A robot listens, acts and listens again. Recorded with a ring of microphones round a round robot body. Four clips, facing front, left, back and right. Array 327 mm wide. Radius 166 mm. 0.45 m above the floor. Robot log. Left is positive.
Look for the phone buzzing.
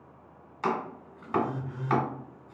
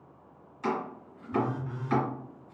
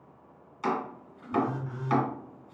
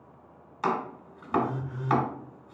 note: The phone buzzing: 115° left.
cmd yaw +115
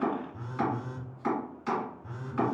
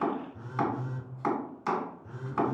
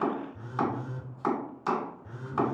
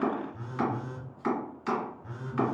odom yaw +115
note: The phone buzzing is now 35° right.
cmd yaw -35
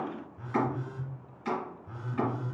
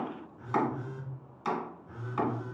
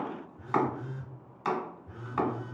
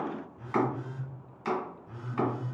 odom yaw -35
note: The phone buzzing is now 10° right.
cmd yaw -10
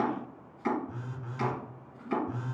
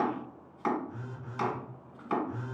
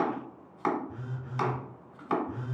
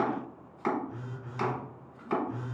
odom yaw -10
end: Found it: a phone buzzing, straight ahead, 1 to 2 m away.